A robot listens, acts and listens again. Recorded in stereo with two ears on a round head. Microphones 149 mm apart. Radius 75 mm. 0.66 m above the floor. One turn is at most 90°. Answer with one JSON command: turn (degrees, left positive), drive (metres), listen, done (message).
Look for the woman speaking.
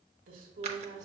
{"turn": -50}
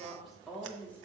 {"turn": 10}
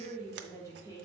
{"turn": 25}
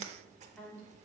{"turn": 10}
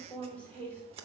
{"turn": 10}
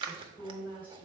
{"turn": 10}
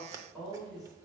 {"done": "Found it: a woman speaking, straight ahead, 2 to 4 m away."}